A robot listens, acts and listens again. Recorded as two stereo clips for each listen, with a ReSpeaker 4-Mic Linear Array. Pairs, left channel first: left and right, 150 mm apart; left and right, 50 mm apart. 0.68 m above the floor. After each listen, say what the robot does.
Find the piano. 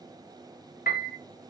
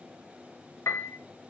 Turn 75° left.
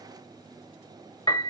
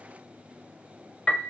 Turn 25° left.
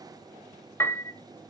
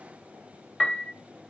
Turn 15° left.
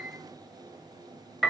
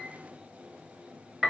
Found it: a piano, straight ahead.